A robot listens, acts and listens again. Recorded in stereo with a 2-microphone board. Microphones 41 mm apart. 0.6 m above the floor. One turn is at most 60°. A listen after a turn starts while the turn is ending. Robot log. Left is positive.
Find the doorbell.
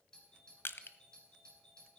note: The doorbell: about 25° left or 155° left.
cmd yaw +25
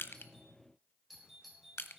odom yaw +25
end: Facing the doorbell.